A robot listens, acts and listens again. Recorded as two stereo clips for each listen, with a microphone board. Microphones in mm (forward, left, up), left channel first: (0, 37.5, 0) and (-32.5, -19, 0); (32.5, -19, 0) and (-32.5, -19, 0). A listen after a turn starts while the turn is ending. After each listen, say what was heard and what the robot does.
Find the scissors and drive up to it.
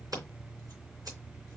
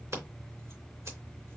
The scissors: 140° right. Turn 140° right.
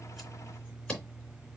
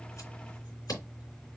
The scissors is now 15° right. Turn 15° right.
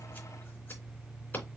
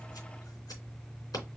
Drive 1.0 m forward.
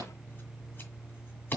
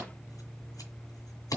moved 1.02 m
Drive 1.0 m forward.
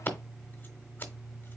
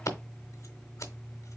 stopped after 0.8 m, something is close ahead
The scissors is now 10° left. Turn 10° left.
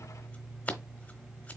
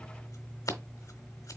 I am next to the scissors.